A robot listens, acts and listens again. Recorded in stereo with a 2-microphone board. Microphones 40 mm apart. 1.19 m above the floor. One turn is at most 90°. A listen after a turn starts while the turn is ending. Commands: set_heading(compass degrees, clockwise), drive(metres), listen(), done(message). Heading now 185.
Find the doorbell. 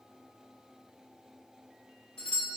set_heading(170)
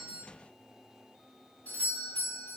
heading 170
set_heading(80)
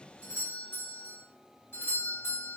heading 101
set_heading(21)
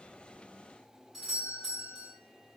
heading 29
set_heading(19)
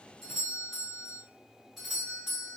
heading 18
done("Facing the doorbell.")